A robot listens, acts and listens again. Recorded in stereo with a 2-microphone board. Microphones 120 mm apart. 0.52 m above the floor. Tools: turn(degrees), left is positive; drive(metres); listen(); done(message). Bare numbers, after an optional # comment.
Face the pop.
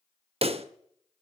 # The pop: about 55° right or 125° right.
turn(-55)
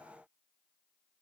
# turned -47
listen()
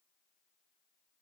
done("I heard a pop, but can't make it out now. It was about 10° right or 75° right.")